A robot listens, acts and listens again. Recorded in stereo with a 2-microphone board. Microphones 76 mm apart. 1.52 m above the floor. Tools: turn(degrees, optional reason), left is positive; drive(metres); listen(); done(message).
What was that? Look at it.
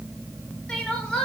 turn(degrees=30)
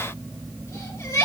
turn(degrees=135, reason="So it is at 135° left.")
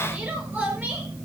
turn(degrees=-20, reason="The crying is now 20° right.")
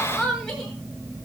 done("Facing the crying, over 4 m away.")